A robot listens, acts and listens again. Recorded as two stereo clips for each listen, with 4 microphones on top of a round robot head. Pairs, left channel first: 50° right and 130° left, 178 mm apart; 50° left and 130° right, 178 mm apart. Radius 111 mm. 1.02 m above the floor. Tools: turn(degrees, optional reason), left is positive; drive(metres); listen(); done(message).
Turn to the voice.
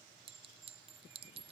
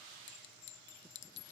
listen()
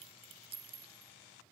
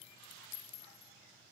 listen()
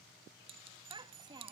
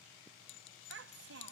turn(degrees=-160, reason="The child speaking: 160° right.")
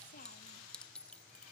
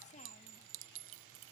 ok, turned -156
listen()
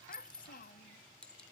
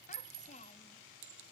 done("Facing the child speaking.")